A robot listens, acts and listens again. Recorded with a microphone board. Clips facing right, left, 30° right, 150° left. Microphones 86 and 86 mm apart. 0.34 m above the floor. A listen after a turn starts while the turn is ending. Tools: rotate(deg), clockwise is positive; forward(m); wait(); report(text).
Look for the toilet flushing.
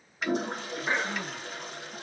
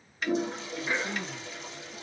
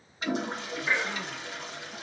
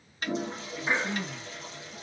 rotate(60)
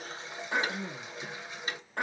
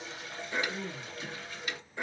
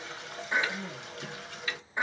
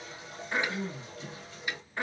rotate(20)
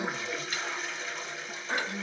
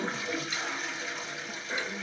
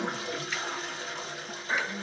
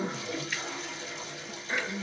report("Facing the toilet flushing.")